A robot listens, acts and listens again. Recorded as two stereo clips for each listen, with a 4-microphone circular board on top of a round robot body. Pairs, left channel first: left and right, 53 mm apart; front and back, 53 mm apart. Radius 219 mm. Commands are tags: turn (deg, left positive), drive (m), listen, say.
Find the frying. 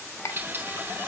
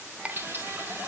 <turn deg="-130"/>
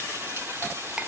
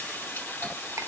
<turn deg="-45"/>
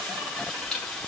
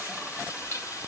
<turn deg="15"/>
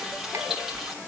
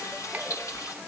<say>Facing the frying.</say>